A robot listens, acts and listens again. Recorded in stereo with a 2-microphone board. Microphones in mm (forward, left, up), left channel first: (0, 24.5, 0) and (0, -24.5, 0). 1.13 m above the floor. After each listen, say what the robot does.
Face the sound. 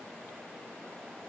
Keep listening.
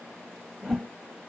Turn 30° right.
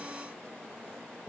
Keep listening.
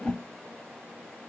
Turn 20° left.
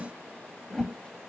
Found it: a whoosh, straight ahead.